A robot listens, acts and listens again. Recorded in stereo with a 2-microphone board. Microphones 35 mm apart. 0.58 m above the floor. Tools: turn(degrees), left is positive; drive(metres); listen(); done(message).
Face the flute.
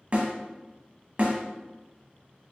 listen()
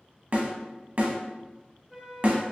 turn(degrees=-30)
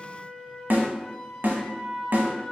turn(degrees=25)
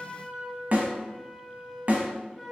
done("Facing the flute.")